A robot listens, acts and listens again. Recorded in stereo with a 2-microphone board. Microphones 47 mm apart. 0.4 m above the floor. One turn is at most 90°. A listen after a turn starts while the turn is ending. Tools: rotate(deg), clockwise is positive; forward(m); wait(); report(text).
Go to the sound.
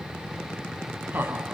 rotate(50)
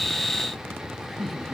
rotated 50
forward(1.0)
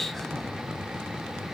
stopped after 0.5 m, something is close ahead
wait()
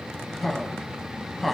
report("Blocked. The laughter is further on, straight ahead.")